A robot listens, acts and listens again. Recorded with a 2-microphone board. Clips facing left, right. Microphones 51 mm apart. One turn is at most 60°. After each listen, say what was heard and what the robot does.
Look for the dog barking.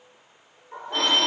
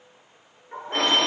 The dog barking: about 30° right or 150° right. Turn 30° right.
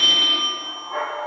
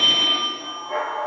So it is at 120° right. Turn 60° right.
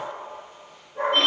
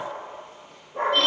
The dog barking is now 65° right. Turn 60° right.
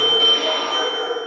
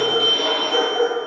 The dog barking is now 25° right. Turn 25° right.
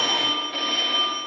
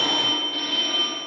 Keep listening.
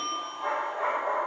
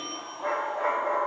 The dog barking is now 10° left. Turn 10° left.
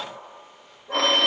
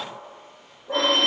Facing the dog barking, over 4 m away.